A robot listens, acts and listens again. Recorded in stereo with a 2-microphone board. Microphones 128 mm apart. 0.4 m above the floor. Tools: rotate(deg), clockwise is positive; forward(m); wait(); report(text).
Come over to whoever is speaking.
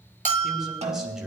rotate(30)
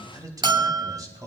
rotate(145)
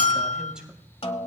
forward(1.0)
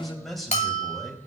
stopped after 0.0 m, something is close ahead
report("Something is in my way. I am facing the man speaking but have not reached it.")